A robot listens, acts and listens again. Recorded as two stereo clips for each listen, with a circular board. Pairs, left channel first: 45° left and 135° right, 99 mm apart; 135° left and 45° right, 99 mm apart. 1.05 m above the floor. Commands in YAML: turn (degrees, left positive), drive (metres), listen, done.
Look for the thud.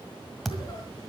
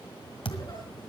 turn: 135
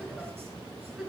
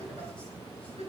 done: "Facing where the thud came from. I can't hear it now."